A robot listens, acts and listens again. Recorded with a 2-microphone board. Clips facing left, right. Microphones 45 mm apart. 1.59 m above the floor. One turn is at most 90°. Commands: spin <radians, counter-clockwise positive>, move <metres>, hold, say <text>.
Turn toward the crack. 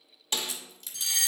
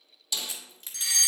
spin -0.52
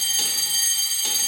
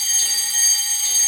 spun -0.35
hold
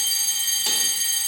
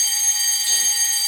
say I heard a crack, but can't make it out now. It was about 10° right or 130° right.